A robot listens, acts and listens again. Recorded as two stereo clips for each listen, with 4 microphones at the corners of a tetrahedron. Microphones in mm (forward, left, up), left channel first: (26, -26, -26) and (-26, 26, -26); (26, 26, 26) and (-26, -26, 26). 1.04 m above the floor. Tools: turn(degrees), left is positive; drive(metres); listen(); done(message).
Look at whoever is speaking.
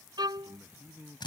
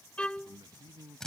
turn(degrees=-160)
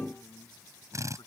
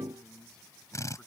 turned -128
turn(degrees=-35)
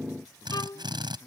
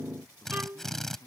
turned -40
done("Found it: a man speaking, straight ahead.")